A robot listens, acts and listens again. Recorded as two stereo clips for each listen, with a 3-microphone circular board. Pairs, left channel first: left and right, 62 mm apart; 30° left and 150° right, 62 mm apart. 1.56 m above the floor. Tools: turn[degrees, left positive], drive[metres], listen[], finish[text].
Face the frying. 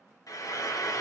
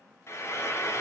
Thought: The frying: 75° left.
Action: turn[75]
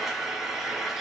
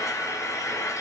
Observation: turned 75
Action: finish[Facing the frying.]